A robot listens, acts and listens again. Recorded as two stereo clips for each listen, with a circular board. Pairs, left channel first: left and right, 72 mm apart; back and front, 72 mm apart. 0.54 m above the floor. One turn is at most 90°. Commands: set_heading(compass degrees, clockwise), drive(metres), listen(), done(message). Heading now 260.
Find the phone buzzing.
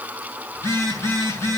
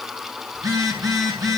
set_heading(225)
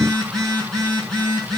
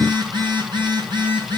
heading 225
done("Found it: a phone buzzing, straight ahead, over 4 m away.")